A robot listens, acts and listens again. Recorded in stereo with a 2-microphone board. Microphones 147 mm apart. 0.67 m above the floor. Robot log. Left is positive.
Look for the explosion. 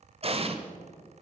note: The explosion: about 40° right or 140° right.
cmd yaw -40
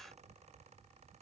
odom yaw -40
cmd idle
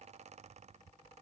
end: I heard an explosion, but can't make it out now. It was about straight ahead or 100° right.